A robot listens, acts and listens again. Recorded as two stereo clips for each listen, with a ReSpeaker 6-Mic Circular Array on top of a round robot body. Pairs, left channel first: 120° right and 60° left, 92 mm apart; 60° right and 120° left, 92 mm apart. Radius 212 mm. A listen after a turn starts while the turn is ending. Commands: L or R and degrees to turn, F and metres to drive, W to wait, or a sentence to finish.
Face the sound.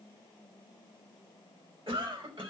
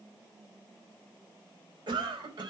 L85
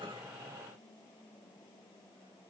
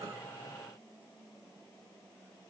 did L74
L10
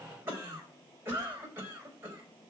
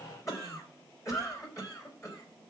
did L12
Found it: a cough, straight ahead.